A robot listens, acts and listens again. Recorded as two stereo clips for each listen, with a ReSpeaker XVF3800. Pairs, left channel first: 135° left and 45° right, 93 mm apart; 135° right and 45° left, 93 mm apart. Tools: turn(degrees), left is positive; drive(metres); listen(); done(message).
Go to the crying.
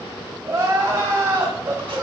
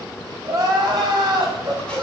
drive(metres=1.0)
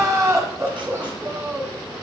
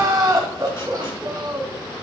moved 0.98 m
drive(metres=1.0)
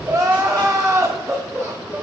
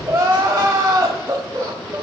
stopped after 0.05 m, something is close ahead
done("I am next to the crying.")